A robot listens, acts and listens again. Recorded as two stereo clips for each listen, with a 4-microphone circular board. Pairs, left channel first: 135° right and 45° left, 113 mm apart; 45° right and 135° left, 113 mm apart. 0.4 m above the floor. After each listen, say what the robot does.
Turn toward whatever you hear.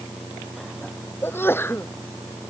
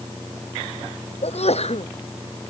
Turn 65° right.
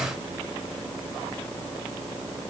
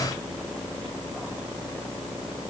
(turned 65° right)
I heard a sneeze from this way, but can't make it out now.